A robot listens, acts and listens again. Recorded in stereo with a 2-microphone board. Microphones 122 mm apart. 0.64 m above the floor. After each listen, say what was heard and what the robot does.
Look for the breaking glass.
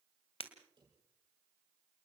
The breaking glass: about 55° left or 125° left. Turn 55° left.
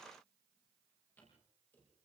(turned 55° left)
Keep listening.
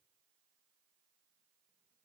I heard breaking glass, but can't make it out now. It was about straight ahead or 70° left.